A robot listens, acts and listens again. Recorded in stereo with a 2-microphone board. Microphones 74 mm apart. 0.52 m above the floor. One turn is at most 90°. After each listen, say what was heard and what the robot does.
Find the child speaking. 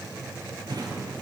Keep listening.
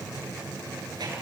Keep listening.
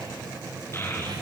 The child speaking: about 30° left or 150° left. Turn 30° left.
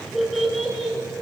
Facing the child speaking.